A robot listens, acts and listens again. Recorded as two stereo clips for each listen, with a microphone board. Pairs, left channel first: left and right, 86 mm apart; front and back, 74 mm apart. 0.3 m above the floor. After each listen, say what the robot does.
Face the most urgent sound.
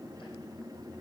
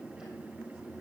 Keep listening.
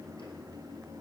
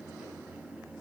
Keep listening.
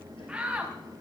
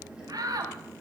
Turn 165° right.
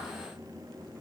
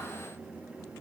Keep listening.
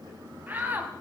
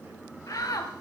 Turn 25° right.
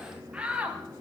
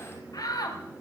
Turn 15° right.
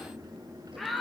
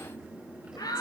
Facing the shout, 1 to 2 m away.